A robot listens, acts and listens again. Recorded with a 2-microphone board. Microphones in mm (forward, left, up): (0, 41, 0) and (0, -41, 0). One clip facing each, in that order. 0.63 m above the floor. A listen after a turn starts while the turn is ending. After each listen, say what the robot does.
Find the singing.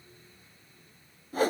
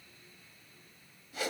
Keep listening.
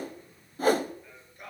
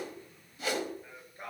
Turn 30° right.
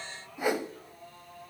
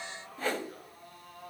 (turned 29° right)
Turn 120° right.
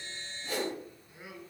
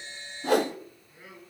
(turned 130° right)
Turn 15° left.
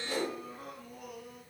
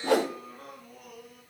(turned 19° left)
Facing the singing.